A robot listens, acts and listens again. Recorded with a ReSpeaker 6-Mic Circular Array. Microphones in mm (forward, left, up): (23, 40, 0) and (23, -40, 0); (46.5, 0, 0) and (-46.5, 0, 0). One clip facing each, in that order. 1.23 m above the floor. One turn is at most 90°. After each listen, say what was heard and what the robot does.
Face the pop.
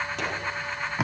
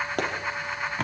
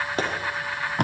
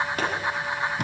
The pop: 60° right. Turn 60° right.
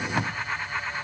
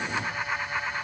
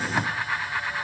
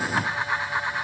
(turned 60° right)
Facing where the pop came from. I can't hear it now.